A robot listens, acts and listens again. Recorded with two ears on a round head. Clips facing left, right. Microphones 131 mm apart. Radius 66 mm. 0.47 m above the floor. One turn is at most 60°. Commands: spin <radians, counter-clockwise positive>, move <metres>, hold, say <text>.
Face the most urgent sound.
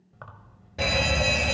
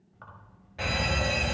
spin 0.87
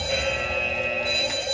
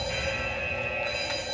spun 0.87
spin 1.05
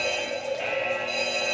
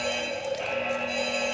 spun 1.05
say Facing the fire alarm, 2 to 4 m away.